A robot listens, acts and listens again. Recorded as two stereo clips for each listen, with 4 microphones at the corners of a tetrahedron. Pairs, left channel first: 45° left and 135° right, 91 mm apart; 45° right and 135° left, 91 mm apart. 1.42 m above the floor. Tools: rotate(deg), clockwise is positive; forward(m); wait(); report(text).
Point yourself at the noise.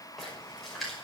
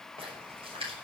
rotate(-135)
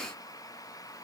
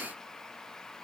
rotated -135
report("I heard a splash from this way, but can't make it out now.")